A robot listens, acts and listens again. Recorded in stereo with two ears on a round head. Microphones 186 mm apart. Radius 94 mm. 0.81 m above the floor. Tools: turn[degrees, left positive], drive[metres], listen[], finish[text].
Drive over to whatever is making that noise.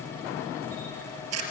Action: turn[-90]
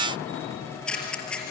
Action: drive[1.0]
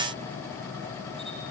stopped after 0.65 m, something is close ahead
Action: listen[]
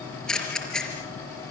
Action: finish[Something is in my way. I am facing the camera shutter but have not reached it.]